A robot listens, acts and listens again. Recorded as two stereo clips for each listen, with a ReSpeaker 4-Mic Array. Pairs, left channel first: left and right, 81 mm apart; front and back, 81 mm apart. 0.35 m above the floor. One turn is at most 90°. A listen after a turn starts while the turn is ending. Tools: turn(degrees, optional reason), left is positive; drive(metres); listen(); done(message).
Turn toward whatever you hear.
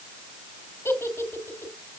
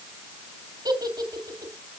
turn(degrees=90, reason="The giggle: 150° left.")
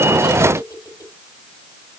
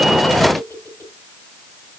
turn(degrees=55, reason="The giggle is now 55° left.")
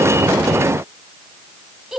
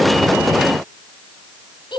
done("Facing the giggle.")